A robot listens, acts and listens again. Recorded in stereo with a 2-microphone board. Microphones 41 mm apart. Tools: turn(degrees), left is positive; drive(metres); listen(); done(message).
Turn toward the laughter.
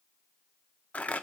listen()
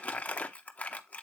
listen()
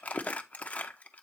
done("I can't make out laughter to turn to.")